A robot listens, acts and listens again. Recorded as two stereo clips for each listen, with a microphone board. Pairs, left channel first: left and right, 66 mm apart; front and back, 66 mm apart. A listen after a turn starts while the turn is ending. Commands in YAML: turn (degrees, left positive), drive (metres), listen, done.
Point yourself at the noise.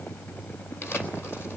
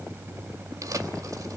turn: 145
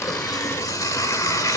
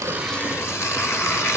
turn: 50
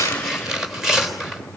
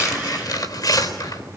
done: "Found it: tearing paper, straight ahead, 2 to 4 m away."